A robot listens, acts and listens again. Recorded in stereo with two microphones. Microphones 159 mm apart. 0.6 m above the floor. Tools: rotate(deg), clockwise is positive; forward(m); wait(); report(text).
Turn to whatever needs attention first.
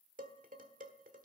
wait()
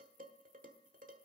wait()
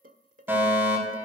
rotate(30)
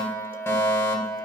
rotate(-15)
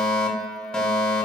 report("Found it: a fire alarm, straight ahead.")